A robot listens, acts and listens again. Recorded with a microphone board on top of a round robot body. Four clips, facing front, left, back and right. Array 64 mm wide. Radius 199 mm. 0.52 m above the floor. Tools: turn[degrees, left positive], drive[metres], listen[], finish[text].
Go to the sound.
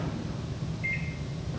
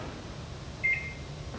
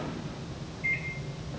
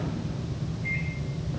Thought: The microwave: 75° left.
Action: turn[75]
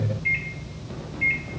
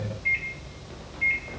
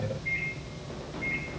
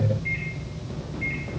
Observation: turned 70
Action: drive[1.0]
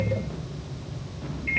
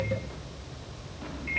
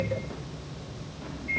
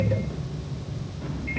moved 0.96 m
Action: drive[1.0]
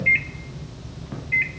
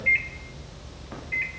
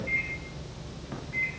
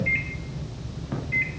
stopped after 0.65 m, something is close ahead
Action: finish[Arrived at the microwave, straight ahead.]